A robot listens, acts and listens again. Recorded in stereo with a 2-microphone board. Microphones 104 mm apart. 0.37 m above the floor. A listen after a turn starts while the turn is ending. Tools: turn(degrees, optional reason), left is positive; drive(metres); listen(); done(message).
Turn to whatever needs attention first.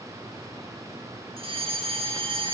turn(degrees=-60, reason="The fire alarm: about 60° right or 120° right.")
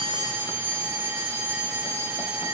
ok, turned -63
turn(degrees=-20, reason="So it is at 20° right.")
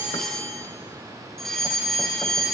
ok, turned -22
done("Facing the fire alarm, 2 to 4 m away.")